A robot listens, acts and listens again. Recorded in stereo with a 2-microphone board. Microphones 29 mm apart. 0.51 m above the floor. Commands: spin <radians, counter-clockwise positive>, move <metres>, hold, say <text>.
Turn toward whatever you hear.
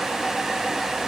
hold
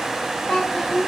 spin 0.61
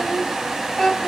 spin 0.17
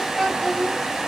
spin 0.17
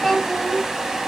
spin 0.17
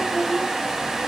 spin 0.17
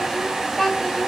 say Found it: a child speaking, straight ahead.